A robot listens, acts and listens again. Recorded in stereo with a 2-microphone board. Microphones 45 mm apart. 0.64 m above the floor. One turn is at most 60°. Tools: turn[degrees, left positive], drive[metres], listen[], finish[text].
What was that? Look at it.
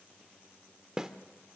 Action: turn[-30]
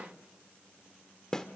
Thought: So it is at 15° left.
Action: turn[15]
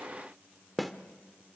Action: finish[Found it: a snare drum, straight ahead, 1 to 2 m away.]